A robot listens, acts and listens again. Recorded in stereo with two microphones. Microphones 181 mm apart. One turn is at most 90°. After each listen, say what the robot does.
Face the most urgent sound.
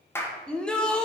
Turn 30° left.
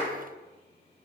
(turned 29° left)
Keep listening.
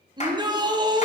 Turn 25° right.
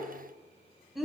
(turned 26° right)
Found it: a shout, straight ahead, 1 to 2 m away.